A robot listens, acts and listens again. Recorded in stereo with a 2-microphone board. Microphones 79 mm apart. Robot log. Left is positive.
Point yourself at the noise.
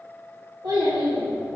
note: The child speaking: about 70° right or 110° right.
cmd yaw -70
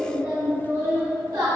note: So it is at 55° right.
cmd yaw -55
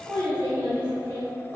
note: The child speaking is now 35° right.
cmd yaw -35
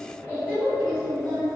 note: The child speaking is now 20° left.
cmd yaw +20
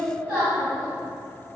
end: Found it: a child speaking, straight ahead.